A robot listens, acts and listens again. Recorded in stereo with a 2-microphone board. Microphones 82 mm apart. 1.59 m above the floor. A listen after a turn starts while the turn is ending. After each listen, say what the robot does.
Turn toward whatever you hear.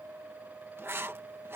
Turn 30° right.
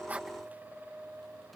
Keep listening.
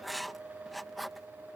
Found it: writing, straight ahead.